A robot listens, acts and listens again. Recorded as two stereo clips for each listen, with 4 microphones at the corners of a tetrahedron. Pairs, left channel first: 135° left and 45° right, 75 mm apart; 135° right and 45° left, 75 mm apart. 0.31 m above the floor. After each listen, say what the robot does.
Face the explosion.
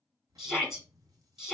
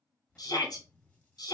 Turn 65° right.
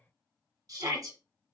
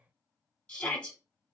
I heard an explosion from this way, but can't make it out now.